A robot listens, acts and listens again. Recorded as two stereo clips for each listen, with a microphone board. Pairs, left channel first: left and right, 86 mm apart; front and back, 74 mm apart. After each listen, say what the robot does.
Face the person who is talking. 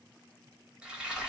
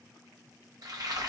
Keep listening.
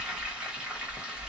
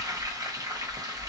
Keep listening.
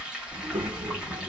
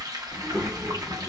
Turn 95° right.
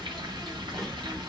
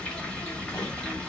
Found it: a child speaking, straight ahead.